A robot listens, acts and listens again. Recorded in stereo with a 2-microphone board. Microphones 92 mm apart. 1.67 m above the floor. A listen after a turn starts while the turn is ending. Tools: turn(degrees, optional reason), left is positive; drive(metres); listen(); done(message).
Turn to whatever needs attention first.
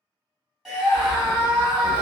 turn(degrees=-30)
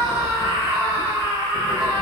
turn(degrees=-145, reason="So it is at 145° right.")
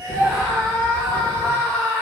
turn(degrees=15, reason="The scream is now 15° left.")
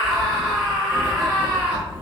done("Found it: a scream, straight ahead.")